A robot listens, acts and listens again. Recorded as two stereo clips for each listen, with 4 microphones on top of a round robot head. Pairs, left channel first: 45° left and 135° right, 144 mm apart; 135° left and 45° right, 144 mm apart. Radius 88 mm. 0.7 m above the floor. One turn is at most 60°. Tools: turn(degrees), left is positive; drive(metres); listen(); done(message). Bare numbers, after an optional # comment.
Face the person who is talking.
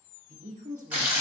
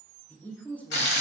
# The woman speaking: 145° right.
turn(-60)
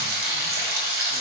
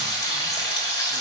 # Nothing new. It was at 85° right.
turn(-60)
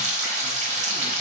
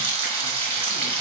# Nothing new. It was at 25° right.
turn(-25)
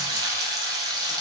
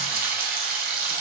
done("I heard a woman speaking from this way, but can't make it out now.")